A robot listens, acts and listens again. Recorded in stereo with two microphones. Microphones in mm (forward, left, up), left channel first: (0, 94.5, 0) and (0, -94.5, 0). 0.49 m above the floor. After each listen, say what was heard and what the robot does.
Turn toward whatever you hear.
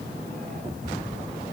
Keep listening.
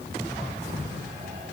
Keep listening.
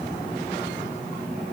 I can't make out anything.